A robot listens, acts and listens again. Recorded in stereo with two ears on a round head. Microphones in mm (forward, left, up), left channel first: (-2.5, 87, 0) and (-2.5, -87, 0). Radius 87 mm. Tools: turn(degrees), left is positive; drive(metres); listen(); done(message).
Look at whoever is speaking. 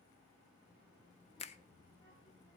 turn(degrees=25)
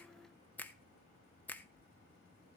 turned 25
turn(degrees=130)
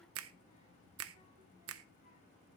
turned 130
turn(degrees=35)
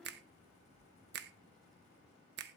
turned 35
done("Facing the child speaking.")